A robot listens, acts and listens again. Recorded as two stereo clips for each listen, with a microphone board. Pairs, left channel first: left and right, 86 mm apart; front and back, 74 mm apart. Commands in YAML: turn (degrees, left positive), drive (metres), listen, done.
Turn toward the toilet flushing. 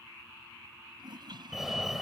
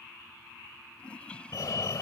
turn: -75
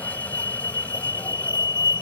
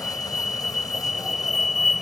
listen: true
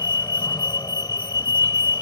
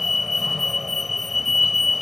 listen: true
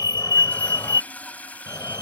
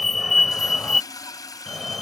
turn: 20
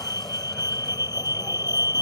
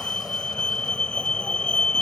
listen: true
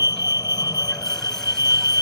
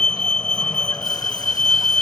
listen: true
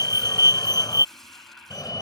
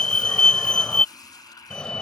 done: "Facing where the toilet flushing came from. I can't hear it now."